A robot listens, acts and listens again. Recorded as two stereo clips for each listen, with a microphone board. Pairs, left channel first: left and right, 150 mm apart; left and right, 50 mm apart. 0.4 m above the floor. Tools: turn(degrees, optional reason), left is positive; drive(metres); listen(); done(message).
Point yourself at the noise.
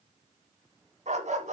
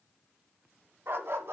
turn(degrees=-60, reason="The dog barking: about 60° right or 120° right.")
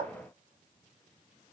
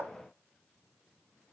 turn(degrees=-50, reason="So it is at 50° right.")
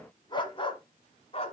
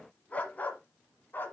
turn(degrees=45, reason="The dog barking is now 45° left.")
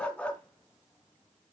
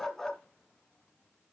turn(degrees=10, reason="The dog barking is now 10° left.")
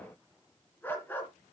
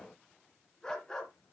turn(degrees=10, reason="The dog barking is now 10° left.")
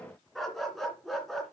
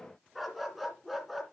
done("Facing the dog barking.")